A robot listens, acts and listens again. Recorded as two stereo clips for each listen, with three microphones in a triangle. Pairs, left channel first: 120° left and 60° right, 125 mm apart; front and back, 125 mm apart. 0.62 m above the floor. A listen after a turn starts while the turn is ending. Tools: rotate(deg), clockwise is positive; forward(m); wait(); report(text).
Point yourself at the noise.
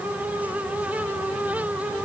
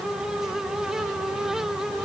wait()
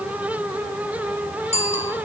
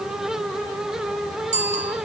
rotate(-150)
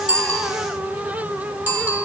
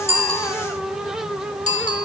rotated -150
rotate(-15)
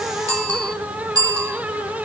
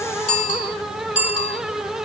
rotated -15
report("Found it: a bicycle bell, straight ahead, 2 to 4 m away.")